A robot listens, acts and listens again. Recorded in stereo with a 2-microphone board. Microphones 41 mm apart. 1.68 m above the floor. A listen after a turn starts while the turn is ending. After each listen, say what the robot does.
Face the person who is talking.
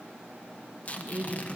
Turn 35° right.
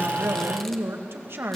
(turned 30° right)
Turn 115° right.
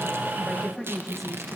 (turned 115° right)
Found it: a woman speaking, straight ahead, 1 to 2 m away.